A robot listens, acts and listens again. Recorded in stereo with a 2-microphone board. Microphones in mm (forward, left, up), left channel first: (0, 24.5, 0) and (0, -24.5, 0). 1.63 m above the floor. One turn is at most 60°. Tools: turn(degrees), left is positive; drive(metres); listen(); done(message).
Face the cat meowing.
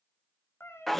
turn(degrees=60)
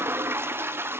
listen()
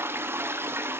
listen()
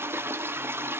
done("I heard a cat meowing, but can't make it out now. It was about straight ahead or 60° left.")